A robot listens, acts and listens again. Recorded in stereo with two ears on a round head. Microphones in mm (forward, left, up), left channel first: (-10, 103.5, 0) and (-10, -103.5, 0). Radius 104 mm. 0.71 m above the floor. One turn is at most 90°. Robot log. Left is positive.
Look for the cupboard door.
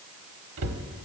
note: The cupboard door: about 70° right or 110° right.
cmd yaw -70
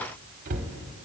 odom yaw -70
note: So it is at 35° right.
cmd yaw -35
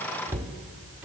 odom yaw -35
note: The cupboard door is now 10° right.
cmd yaw -10
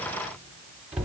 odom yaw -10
end: Facing the cupboard door, under 1 m away.